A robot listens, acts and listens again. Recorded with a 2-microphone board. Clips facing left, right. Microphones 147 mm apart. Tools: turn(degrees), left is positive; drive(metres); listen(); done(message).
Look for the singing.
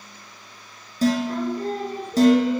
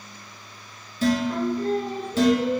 turn(degrees=40)
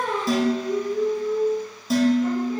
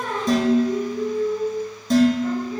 turn(degrees=120)
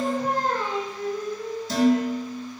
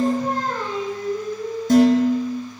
turn(degrees=20)
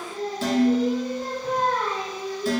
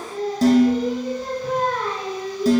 done("Facing the singing.")